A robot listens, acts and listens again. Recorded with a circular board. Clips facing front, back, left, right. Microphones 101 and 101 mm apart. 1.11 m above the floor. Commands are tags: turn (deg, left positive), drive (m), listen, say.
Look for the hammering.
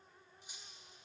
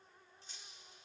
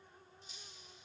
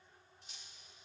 <listen/>
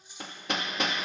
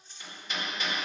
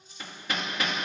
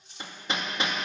<turn deg="-25"/>
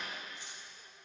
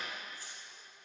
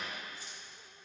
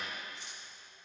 <listen/>
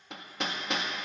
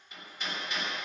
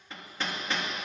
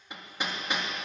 <turn deg="-15"/>
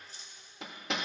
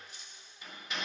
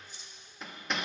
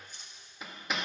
<say>Facing the hammering.</say>